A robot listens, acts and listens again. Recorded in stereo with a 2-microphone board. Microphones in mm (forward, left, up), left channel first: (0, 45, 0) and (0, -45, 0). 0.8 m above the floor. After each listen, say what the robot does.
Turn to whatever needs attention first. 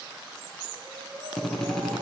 Turn 70° right.
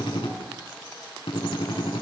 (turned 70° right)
Keep listening.
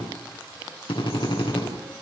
Keep listening.
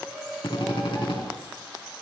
Facing the shout.